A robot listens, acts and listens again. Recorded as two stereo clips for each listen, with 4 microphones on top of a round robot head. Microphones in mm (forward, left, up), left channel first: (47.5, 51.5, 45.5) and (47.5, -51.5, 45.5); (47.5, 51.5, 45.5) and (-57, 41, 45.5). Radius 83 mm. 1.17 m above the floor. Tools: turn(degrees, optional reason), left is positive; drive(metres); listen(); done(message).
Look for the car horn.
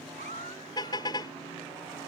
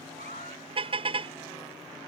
turn(degrees=150, reason="The car horn: 150° left.")
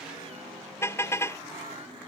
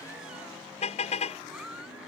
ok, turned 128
turn(degrees=25, reason="The car horn is now 25° left.")
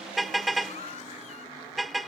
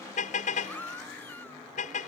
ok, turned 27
done("Facing the car horn.")